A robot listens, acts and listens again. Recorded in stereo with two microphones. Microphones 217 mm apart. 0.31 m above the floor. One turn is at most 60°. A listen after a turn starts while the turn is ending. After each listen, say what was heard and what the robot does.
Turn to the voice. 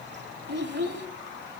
The child speaking: about 55° right or 125° right. Turn 55° right.
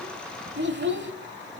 So it is at 65° right. Turn 60° right.
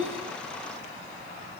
Keep listening.
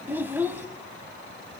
The child speaking is now 10° right. Turn 10° right.
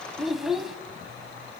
Found it: a child speaking, straight ahead.